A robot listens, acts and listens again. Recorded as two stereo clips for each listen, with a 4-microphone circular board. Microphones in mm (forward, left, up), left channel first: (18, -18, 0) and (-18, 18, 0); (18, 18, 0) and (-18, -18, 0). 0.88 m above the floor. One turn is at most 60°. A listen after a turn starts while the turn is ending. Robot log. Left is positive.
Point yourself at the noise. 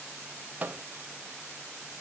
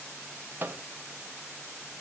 note: The microwave: 175° right.
cmd yaw -60
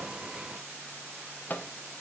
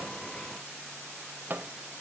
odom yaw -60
note: The microwave is now 90° right.
cmd yaw -60
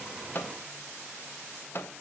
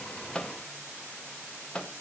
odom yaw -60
note: The microwave is now 20° right.
cmd yaw -20
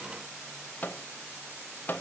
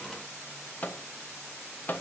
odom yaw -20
end: Facing the microwave, under 1 m away.